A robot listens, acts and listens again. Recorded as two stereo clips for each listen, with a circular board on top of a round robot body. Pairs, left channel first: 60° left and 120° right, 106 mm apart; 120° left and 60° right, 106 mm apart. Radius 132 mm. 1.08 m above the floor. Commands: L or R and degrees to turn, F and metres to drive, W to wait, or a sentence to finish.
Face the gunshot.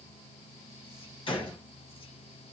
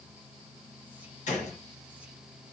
L105
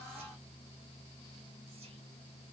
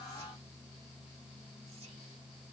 Facing where the gunshot came from. I can't hear it now.